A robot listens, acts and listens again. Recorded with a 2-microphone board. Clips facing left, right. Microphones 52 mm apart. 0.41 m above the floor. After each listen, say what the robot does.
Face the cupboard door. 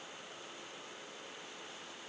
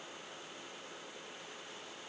Keep listening.
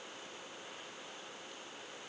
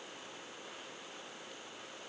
Keep listening.
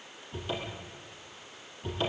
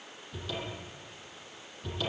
Turn 30° left.
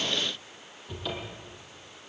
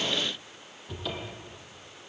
Facing the cupboard door, over 4 m away.